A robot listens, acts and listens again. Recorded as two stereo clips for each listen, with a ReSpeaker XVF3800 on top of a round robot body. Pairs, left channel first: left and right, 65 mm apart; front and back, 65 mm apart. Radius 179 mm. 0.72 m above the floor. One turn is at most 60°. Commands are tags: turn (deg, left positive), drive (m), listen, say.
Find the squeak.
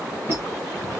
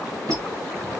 <turn deg="-60"/>
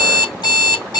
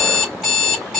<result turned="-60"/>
<turn deg="-60"/>
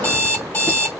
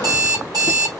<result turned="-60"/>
<turn deg="-35"/>
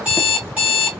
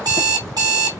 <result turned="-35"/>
<say>Facing where the squeak came from. I can't hear it now.</say>